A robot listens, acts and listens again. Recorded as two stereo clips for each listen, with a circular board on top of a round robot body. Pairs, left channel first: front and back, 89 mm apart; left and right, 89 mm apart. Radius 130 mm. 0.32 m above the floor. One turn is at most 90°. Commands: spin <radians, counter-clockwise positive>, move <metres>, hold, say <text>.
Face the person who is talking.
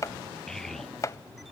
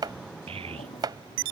spin -1.48
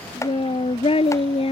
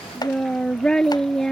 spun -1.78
say Found it: a child speaking, straight ahead.